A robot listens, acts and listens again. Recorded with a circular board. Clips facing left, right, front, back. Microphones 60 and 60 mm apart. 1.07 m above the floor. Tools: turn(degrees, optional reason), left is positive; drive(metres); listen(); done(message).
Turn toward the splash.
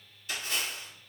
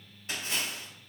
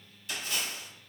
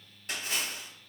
turn(degrees=-145, reason="The splash: 145° right.")
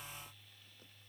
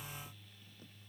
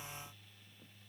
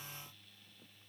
done("I heard a splash from this way, but can't make it out now.")